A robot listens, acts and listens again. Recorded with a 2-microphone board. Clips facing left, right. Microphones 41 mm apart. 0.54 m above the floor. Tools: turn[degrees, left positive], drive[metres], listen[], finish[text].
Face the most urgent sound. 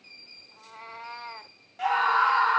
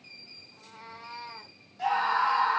Thought: The scream: about 60° left or 120° left.
Action: turn[60]
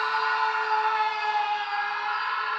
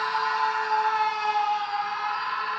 Thought: So it is at 40° left.
Action: turn[40]
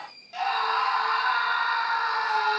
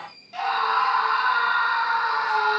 Action: finish[Found it: a scream, straight ahead.]